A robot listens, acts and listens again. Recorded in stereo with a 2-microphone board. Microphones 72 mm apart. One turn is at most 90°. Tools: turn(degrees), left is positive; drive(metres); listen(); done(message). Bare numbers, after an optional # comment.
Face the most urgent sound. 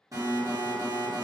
# The alarm: about 55° right or 125° right.
turn(-55)
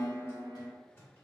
done("Facing the alarm, 1 to 2 m away.")